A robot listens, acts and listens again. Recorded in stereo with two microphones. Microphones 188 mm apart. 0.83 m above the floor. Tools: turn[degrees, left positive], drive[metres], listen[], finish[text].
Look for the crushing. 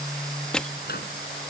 Action: turn[30]
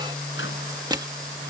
Thought: So it is at 25° right.
Action: turn[-25]
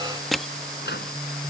Action: finish[Found it: crushing, straight ahead.]